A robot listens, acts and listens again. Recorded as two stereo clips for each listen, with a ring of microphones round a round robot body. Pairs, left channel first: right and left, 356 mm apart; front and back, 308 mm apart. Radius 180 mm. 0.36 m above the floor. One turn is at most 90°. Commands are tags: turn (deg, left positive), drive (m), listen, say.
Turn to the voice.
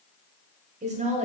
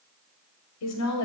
<turn deg="20"/>
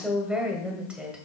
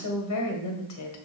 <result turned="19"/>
<say>Facing the woman speaking.</say>